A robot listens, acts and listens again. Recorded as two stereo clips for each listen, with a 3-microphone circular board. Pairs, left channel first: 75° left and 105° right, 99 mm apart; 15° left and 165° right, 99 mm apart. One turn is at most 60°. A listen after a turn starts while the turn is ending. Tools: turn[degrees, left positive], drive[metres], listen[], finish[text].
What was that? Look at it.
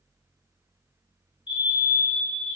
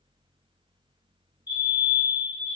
Thought: The fire alarm: 50° left.
Action: turn[50]
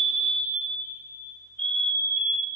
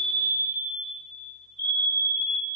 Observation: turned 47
Action: finish[Found it: a fire alarm, straight ahead, 2 to 4 m away.]